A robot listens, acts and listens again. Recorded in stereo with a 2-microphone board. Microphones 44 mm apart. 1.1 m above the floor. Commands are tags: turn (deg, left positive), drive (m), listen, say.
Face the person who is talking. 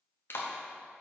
<listen/>
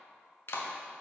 <listen/>
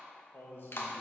<turn deg="55"/>
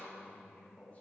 <turn deg="35"/>
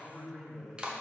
<say>Found it: a man speaking, straight ahead.</say>